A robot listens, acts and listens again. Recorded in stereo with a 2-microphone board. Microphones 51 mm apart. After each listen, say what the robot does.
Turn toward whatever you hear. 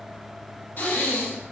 Turn 40° left.
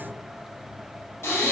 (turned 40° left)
Turn 95° left.
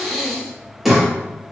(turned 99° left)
Found it: breathing, straight ahead.